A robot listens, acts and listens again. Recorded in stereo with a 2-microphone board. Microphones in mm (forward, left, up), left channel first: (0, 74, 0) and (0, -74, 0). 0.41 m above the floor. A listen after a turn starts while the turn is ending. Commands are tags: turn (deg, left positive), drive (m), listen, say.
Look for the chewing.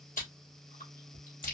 <turn deg="70"/>
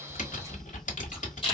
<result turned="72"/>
<turn deg="35"/>
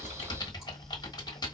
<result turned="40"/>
<listen/>
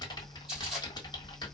<say>Found it: chewing, straight ahead.</say>